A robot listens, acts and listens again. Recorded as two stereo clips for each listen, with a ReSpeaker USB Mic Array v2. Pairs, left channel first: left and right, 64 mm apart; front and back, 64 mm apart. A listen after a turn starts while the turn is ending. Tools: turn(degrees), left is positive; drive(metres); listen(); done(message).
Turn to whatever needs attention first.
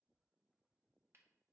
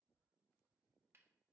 listen()
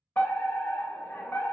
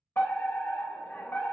turn(degrees=35)
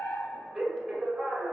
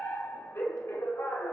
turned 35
turn(degrees=-25)
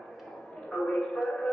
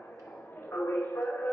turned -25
turn(degrees=10)
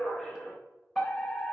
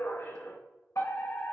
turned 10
done("Found it: a fire alarm, straight ahead, 2 to 4 m away.")